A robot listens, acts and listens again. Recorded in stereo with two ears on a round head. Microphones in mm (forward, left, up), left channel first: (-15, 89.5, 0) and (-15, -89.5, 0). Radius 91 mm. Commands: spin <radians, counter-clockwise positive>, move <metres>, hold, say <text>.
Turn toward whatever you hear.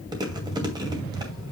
spin -0.35
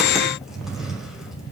hold
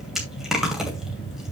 say Facing the chewing, 2 to 4 m away.